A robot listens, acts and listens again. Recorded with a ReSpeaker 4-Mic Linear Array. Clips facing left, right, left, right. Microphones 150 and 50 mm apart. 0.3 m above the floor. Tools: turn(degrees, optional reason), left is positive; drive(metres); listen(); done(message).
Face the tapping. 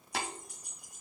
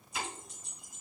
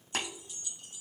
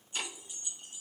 turn(degrees=90)
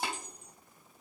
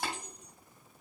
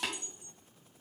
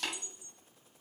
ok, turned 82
turn(degrees=20, reason="So it is at 20° left.")
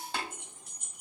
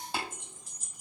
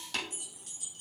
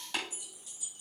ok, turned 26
turn(degrees=-10, reason="The tapping is now 10° right.")
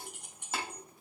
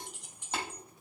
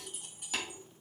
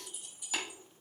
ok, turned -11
done("Found it: tapping, straight ahead.")